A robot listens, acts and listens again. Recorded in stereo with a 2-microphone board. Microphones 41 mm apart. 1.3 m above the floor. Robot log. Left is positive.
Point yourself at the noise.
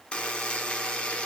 note: The buzzer: about 25° left or 155° left.
cmd yaw +25
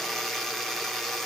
end: Found it: a buzzer, straight ahead, under 1 m away.